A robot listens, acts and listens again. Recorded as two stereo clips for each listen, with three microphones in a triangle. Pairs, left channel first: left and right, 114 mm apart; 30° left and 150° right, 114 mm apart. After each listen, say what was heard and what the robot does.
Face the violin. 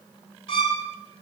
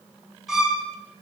The violin: 125° left. Turn 125° left.
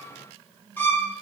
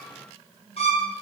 The violin is now 20° left. Turn 20° left.
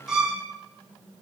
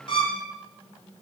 The violin is now 10° right. Turn 10° right.
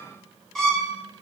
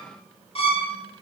Facing the violin, 1 to 2 m away.